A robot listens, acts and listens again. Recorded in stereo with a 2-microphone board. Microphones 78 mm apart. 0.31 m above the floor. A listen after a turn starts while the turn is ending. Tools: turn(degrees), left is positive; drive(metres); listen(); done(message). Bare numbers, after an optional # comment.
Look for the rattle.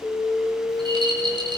turn(-90)
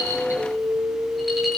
done("Facing the rattle, over 4 m away.")